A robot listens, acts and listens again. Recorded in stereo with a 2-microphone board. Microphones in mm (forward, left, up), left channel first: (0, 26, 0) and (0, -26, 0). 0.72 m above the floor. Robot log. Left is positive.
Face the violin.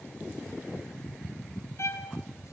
note: The violin: about 60° left or 120° left.
cmd yaw +60
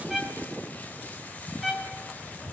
end: Facing the violin.